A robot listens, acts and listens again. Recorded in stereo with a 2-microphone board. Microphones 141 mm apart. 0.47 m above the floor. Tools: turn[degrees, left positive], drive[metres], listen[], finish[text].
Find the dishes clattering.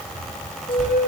Action: listen[]
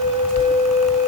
Action: listen[]
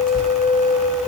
Action: finish[I can't make out dishes clattering, only a flute.]